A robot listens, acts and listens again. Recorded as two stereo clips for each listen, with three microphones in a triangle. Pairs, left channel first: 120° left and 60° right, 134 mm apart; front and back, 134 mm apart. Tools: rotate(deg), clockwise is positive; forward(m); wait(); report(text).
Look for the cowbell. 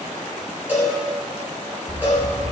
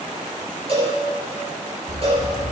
rotate(135)
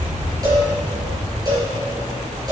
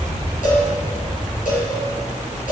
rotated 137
wait()
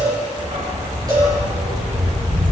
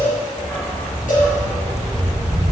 report("Facing the cowbell.")